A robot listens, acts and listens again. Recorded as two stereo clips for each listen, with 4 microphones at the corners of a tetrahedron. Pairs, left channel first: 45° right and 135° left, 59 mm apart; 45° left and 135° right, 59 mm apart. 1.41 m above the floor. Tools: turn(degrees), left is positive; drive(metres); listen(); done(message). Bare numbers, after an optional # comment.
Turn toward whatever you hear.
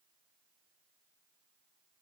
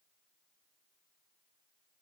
listen()
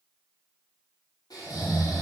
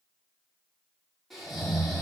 # The snoring: 45° right.
turn(-45)
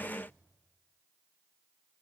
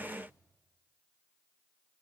listen()
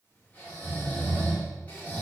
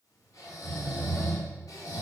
# The snoring is now 20° left.
turn(20)
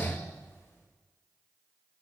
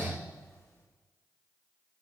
done("Facing the snoring.")